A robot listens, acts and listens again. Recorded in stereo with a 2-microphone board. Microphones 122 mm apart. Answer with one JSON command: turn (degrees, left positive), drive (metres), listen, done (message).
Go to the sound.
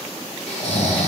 {"turn": 90}
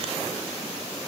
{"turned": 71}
{"turn": 20}
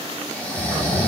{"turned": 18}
{"turn": 10}
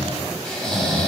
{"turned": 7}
{"drive": 1.0}
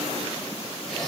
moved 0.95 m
{"listen": true}
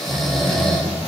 {"drive": 1.0}
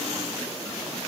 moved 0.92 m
{"listen": true}
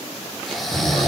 {"drive": 1.0}
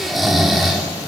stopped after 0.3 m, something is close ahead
{"done": "I am next to the snoring."}